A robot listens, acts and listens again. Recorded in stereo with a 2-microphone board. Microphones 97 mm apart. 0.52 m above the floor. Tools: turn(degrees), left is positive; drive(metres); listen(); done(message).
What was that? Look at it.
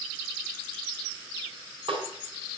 turn(degrees=-65)
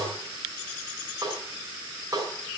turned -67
turn(degrees=-45)
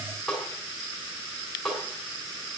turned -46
done("Facing the snare drum, over 4 m away.")